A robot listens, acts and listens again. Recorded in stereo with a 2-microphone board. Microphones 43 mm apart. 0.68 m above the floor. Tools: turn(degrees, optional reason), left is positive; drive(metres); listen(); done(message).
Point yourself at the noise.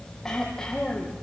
turn(degrees=30)
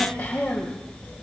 turn(degrees=140, reason="So it is at 140° left.")
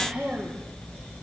turn(degrees=-20, reason="The throat clearing is now 20° right.")
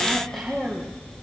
done("Facing the throat clearing, over 4 m away.")